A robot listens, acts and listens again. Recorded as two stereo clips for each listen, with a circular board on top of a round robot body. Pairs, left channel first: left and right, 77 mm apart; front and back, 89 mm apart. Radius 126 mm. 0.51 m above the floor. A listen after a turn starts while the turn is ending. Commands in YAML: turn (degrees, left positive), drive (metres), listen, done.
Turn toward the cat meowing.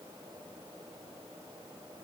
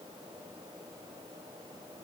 listen: true
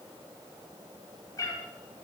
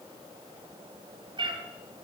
turn: 140
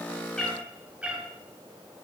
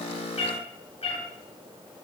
turn: -15
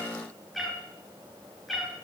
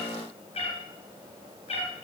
done: "Found it: a cat meowing, straight ahead, over 4 m away."